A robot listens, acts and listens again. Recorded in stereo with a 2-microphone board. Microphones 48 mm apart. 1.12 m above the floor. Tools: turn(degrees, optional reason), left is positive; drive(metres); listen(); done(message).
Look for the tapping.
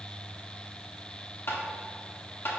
turn(degrees=55, reason="The tapping: about 55° left or 125° left.")
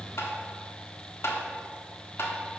turn(degrees=70, reason="So it is at 70° left.")
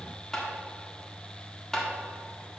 turn(degrees=10, reason="The tapping is now 10° left.")
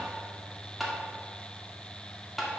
done("Facing the tapping.")